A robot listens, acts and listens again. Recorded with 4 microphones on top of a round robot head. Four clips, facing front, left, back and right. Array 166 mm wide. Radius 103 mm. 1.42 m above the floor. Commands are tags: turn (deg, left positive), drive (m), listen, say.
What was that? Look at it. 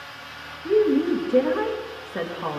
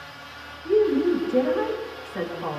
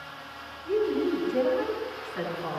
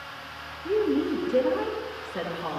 <turn deg="-15"/>
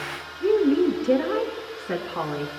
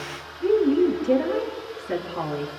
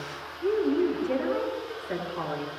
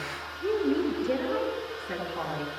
<turn deg="10"/>
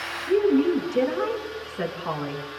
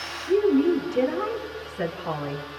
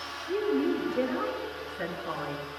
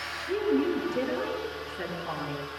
<turn deg="10"/>
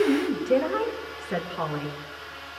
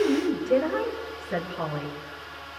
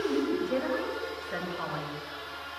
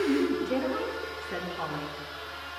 <say>Found it: a woman speaking, straight ahead, over 4 m away.</say>